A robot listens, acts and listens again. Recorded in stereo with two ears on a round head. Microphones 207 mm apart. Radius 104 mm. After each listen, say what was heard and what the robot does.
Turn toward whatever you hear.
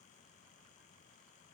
Keep listening.
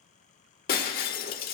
The breaking glass: about 40° left or 140° left. Turn 40° left.
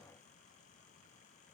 Keep listening.
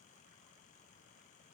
I heard breaking glass, but can't make it out now. It was about straight ahead or 100° left.